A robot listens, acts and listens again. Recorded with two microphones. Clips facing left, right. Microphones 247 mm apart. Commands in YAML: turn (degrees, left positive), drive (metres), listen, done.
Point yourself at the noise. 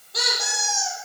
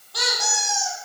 turn: 20
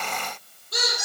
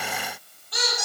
turn: 140
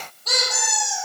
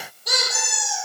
turn: -10
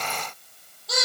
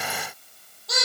done: "Found it: a squeak, straight ahead."